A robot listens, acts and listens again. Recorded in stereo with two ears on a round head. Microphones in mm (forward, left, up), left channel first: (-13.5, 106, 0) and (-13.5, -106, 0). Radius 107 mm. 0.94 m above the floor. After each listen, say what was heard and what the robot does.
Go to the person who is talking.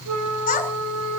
The child speaking: about 35° left or 145° left. Turn 35° left.
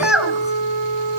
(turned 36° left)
Drive 1.0 m forward.
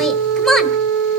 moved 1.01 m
Drive 1.0 m forward.
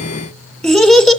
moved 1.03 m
Drive 1.0 m forward.
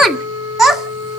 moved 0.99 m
Drive 1.0 m forward.
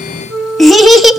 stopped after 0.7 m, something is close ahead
I am next to the child speaking.